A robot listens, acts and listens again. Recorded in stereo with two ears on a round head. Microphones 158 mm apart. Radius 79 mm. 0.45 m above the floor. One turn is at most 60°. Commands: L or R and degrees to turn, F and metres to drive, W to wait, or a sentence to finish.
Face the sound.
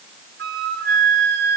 R60
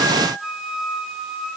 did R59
Facing the flute.